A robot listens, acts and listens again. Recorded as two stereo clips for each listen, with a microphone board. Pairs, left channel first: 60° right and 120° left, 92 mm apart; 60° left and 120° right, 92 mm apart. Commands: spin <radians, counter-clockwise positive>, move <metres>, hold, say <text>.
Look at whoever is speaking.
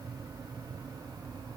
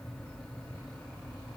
hold
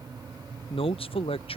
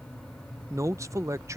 spin -1.13
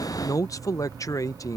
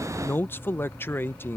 say Found it: a man speaking, straight ahead.